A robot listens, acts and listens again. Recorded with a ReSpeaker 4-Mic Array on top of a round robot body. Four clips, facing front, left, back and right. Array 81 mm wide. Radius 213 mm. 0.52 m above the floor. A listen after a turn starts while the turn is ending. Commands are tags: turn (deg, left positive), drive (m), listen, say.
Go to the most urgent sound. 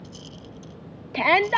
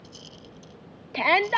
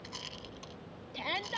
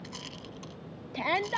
<turn deg="30"/>
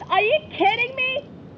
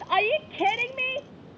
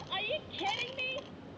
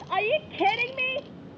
<drive m="1.0"/>
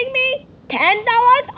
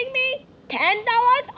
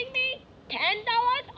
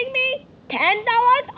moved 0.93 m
<drive m="1.0"/>
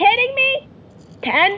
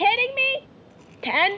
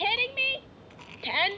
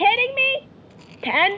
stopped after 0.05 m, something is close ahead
<turn deg="-10"/>
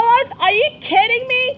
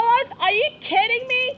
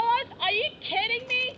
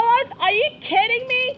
<say>I am next to the shout.</say>